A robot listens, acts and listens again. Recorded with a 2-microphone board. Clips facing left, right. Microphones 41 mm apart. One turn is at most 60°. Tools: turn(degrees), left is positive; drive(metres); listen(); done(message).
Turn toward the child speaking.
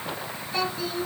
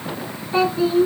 turn(degrees=-30)
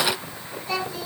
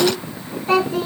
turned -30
turn(degrees=-60)
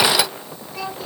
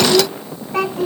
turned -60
turn(degrees=-60)
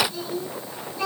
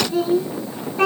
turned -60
turn(degrees=-55)
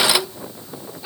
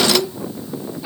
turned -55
done("Found it: a child speaking, straight ahead, 2 to 4 m away.")